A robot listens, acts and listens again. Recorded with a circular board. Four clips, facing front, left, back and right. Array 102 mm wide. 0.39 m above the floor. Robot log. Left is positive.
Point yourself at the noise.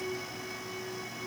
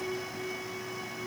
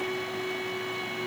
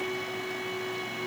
cmd idle
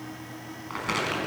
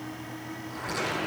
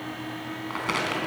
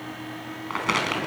note: The crumpling: 100° right.
cmd yaw -100
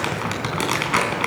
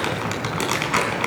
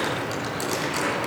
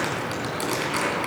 note: The crumpling is now 30° left.
cmd yaw +30
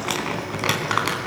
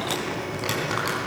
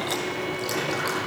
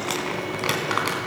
note: The crumpling is now 20° right.
cmd yaw -20
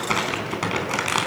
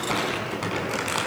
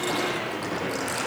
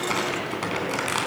end: Found it: crumpling, straight ahead.